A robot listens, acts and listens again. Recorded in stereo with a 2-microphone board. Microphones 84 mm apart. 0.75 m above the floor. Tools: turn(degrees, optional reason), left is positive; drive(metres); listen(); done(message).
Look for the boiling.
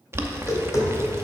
turn(degrees=-30, reason="The boiling: about 30° right or 150° right.")
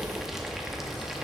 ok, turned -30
done("Facing the boiling.")